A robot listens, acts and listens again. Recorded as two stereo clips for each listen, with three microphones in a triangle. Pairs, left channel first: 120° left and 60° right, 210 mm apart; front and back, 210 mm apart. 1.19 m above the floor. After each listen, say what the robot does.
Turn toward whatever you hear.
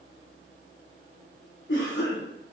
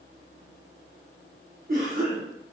Turn 140° left.
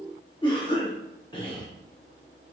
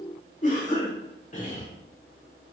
Turn 50° left.
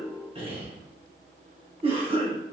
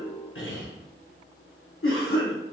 Found it: a cough, straight ahead.